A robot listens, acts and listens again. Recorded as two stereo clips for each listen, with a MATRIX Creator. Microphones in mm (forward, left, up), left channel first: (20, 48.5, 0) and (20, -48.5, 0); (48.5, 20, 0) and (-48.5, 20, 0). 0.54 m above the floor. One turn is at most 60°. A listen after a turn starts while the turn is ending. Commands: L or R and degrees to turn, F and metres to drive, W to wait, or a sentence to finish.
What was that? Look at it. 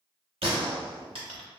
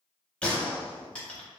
R60
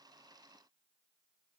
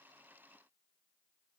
R20
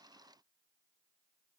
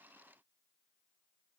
Facing where the gunshot came from. I can't hear it now.